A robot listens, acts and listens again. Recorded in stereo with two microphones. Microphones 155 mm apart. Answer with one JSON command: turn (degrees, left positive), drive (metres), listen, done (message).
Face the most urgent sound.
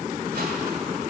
{"listen": true}
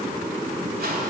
{"listen": true}
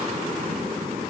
{"done": "I can't make out anything urgent to turn to."}